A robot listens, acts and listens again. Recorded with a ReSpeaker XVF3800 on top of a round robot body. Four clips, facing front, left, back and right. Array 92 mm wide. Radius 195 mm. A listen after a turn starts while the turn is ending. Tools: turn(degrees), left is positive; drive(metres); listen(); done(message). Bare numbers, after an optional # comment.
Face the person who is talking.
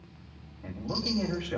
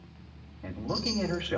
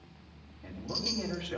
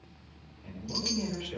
# The man speaking: 80° left.
turn(80)
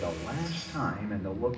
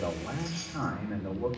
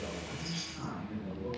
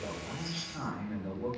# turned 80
# The man speaking is now 30° left.
turn(30)
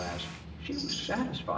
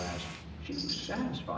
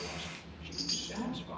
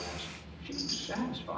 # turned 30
done("Found it: a man speaking, straight ahead.")